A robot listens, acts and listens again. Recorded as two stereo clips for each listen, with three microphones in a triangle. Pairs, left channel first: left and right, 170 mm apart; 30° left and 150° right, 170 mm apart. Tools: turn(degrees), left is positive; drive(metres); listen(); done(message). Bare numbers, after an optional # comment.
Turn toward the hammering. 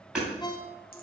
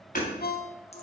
done("Facing the hammering.")